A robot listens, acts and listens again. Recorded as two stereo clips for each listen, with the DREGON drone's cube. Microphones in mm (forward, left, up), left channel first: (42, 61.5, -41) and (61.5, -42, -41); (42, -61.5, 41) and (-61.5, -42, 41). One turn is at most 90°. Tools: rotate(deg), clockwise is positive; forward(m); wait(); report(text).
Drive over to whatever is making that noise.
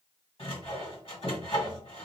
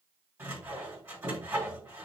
rotate(-90)
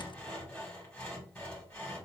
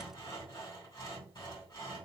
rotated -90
rotate(-25)
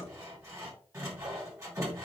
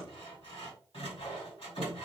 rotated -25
rotate(20)
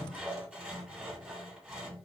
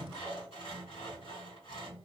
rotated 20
forward(1.0)
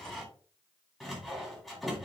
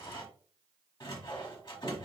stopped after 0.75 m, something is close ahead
rotate(-10)
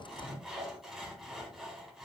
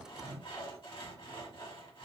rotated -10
report("I am next to the sawing.")